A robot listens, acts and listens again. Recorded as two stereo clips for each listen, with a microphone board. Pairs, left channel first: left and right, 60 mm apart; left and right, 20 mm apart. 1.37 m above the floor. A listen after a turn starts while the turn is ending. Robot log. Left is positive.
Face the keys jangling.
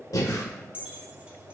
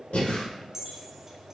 note: The keys jangling: about 20° right or 160° right.
cmd yaw -20
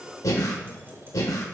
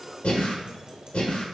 cmd idle
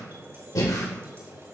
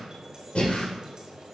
cmd idle
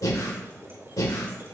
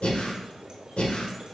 end: I heard keys jangling, but can't make it out now. It was about straight ahead or 140° right.